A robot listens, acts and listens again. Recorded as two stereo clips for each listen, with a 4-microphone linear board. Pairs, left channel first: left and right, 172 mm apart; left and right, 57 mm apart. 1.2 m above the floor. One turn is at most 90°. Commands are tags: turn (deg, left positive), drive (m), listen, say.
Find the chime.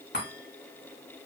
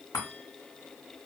<turn deg="90"/>
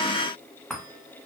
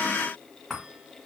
<say>Facing the chime, 1 to 2 m away.</say>